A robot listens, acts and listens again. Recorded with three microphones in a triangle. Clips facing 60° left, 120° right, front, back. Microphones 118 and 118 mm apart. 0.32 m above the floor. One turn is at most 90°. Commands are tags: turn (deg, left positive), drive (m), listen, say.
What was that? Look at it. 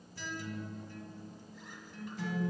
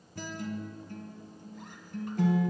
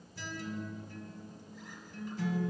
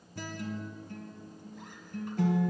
<turn deg="-90"/>
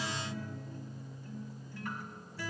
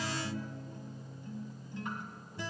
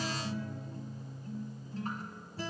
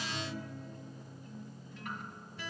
<turn deg="-50"/>
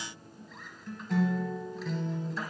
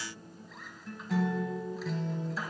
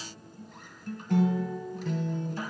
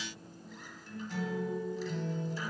<turn deg="-30"/>
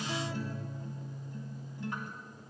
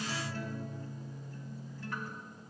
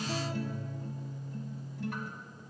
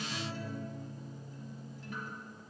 <turn deg="-10"/>
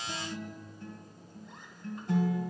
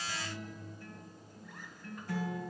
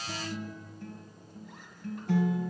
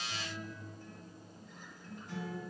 <say>Facing the guitar.</say>